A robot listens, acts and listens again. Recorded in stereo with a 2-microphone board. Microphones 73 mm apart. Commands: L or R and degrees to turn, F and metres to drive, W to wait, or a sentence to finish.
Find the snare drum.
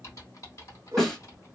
L30
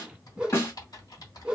L145
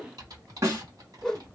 R45
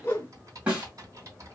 R15
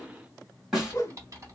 Found it: a snare drum, straight ahead.